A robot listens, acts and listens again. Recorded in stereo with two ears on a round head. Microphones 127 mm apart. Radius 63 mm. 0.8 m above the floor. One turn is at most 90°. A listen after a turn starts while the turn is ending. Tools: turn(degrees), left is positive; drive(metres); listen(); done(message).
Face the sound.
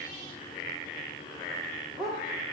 turn(degrees=30)
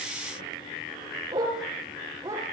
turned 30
turn(degrees=-20)
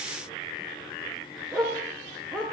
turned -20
done("Found it: a dog barking, straight ahead, over 4 m away.")